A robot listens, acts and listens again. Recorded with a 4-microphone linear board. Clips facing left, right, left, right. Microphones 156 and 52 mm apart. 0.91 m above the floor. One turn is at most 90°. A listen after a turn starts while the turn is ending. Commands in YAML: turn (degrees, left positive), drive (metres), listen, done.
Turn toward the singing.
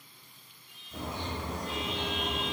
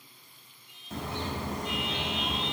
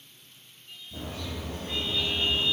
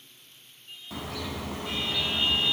turn: -20
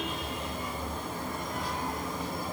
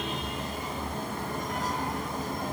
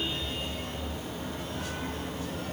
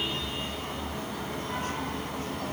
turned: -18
listen: true
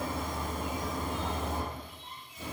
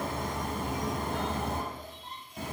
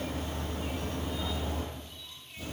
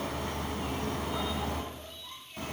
listen: true
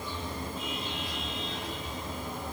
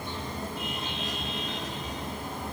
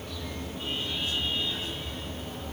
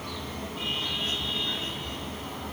done: "I heard singing, but can't make it out now. It was about straight ahead or 145° right."